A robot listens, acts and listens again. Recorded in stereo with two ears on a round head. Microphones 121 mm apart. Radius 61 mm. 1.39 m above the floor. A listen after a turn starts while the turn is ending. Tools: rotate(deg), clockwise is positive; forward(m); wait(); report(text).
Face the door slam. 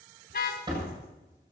rotate(35)
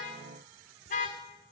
wait()
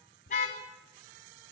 report("I heard a door slam, but can't make it out now. It was about straight ahead or 110° right.")